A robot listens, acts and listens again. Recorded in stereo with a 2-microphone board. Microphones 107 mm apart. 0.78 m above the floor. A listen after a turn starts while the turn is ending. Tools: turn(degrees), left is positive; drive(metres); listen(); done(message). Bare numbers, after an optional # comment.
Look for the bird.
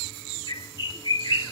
# The bird: about 45° left or 135° left.
turn(45)
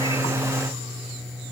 listen()
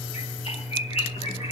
# So it is at 90° left.
turn(90)
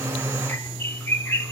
# The bird is now 20° left.
turn(20)
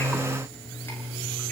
listen()
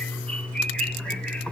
# The bird is now 10° left.
turn(10)
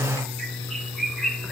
done("Found it: a bird, straight ahead, 1 to 2 m away.")